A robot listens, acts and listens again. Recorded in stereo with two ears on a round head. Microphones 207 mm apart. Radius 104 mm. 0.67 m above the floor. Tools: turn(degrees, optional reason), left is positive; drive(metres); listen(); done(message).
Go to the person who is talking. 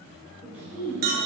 turn(degrees=-30)
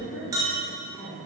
turn(degrees=20, reason="So it is at 20° left.")
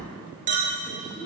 drive(metres=1.0)
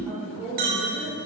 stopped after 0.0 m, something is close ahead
done("Blocked. The woman speaking is further on, straight ahead.")